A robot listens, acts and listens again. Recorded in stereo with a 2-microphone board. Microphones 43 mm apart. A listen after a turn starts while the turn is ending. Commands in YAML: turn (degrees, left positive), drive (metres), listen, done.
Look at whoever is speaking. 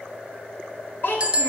turn: 60
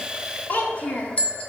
turn: 30
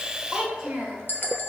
turn: -20
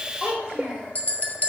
turn: -20
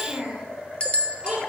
turn: -15
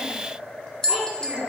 done: "Facing the child speaking."